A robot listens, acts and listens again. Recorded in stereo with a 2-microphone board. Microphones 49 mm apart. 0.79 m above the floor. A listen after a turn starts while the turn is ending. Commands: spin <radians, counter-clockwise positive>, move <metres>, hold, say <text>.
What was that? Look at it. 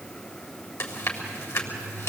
spin 1.22
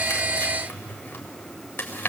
spin 0.61
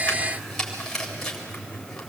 spin 0.17
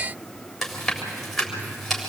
say Found it: chewing, straight ahead, 2 to 4 m away.